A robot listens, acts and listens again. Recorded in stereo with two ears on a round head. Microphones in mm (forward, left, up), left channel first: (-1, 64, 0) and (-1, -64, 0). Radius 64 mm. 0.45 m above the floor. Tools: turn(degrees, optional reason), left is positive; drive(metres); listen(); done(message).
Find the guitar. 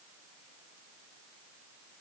listen()
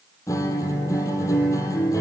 turn(degrees=20, reason="The guitar: about 20° left or 160° left.")
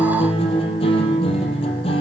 turn(degrees=140, reason="So it is at 140° left.")
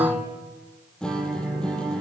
done("Facing the guitar, over 4 m away.")